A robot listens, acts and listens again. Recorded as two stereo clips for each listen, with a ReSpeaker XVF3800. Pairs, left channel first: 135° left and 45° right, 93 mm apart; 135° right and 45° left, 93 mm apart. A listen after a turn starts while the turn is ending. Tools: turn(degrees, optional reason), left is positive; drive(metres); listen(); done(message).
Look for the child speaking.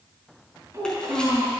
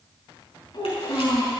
turn(degrees=-100, reason="The child speaking: 100° right.")
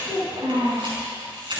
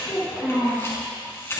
turn(degrees=-30, reason="The child speaking is now 30° right.")
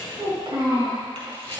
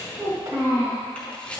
turn(degrees=-15, reason="The child speaking is now 15° right.")
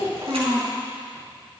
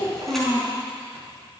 done("Facing the child speaking, over 4 m away.")